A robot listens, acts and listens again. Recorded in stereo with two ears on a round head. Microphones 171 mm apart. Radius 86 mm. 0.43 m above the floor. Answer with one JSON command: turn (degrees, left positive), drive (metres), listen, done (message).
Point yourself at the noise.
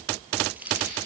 {"turn": -30}
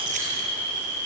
{"listen": true}
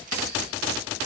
{"listen": true}
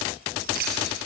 {"turn": -130}
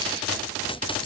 {"listen": true}
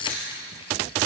{"turn": 25}
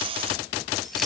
{"listen": true}
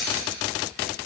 {"done": "Facing the keys jangling."}